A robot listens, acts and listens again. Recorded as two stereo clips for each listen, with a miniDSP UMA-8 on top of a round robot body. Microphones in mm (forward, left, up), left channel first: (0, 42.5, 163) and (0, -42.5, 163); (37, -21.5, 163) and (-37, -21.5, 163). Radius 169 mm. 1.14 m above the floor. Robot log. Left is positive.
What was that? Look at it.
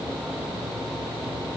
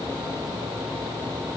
cmd idle
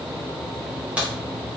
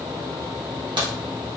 note: The crack: 165° right.
cmd yaw -165
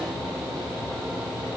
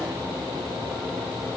end: Facing where the crack came from. I can't hear it now.